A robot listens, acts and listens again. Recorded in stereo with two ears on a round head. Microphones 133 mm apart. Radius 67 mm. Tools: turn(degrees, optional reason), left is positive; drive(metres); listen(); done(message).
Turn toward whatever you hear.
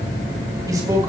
turn(degrees=-25, reason="The man speaking: about 25° right or 155° right.")
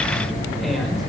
listen()
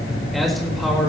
done("Found it: a man speaking, straight ahead.")